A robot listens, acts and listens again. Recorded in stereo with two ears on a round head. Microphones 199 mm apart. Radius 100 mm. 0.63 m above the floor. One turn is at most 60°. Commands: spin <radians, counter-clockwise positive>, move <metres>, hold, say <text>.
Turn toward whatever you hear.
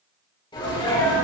spin 0.35
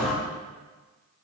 say Found it: a sneeze, straight ahead.